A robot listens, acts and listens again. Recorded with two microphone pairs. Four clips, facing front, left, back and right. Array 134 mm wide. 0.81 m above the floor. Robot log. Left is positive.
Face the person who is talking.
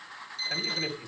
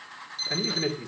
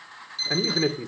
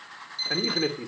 note: The man speaking: 150° right.
cmd yaw -150
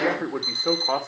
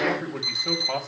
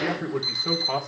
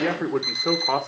note: The man speaking is now 65° right.
cmd yaw -65
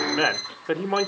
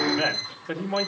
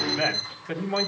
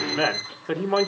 note: The man speaking is now 30° right.
cmd yaw -30
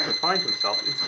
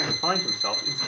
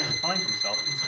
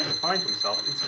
cmd idle
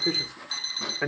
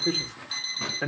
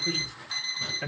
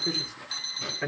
note: The man speaking is now 20° left.
cmd yaw +20
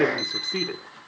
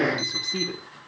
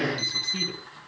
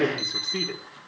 end: Found it: a man speaking, straight ahead, 2 to 4 m away.